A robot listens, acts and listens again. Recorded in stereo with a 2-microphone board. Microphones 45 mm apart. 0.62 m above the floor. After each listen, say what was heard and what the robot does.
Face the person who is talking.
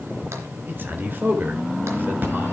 The man speaking: about 50° right or 130° right. Turn 50° right.
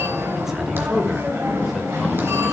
Keep listening.
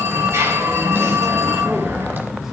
Keep listening.
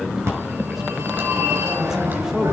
So it is at 10° right. Turn 10° right.
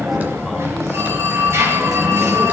Keep listening.
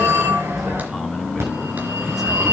Keep listening.
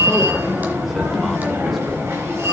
Facing where the man speaking came from. I can't hear it now.